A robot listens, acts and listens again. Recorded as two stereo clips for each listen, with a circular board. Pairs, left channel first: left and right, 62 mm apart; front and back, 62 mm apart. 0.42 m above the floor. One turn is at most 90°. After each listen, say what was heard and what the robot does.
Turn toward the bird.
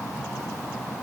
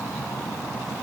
Keep listening.
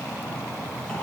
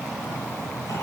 Keep listening.
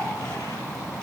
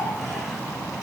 I can't make out a bird.